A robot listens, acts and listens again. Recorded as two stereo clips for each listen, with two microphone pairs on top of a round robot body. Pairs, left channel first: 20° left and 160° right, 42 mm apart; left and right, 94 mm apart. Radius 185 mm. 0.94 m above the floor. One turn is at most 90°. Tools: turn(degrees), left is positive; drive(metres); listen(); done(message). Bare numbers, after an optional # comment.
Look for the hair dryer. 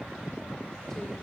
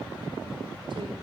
listen()
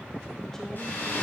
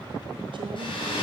# The hair dryer: 60° left.
turn(60)
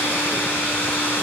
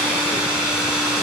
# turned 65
done("Found it: a hair dryer, straight ahead.")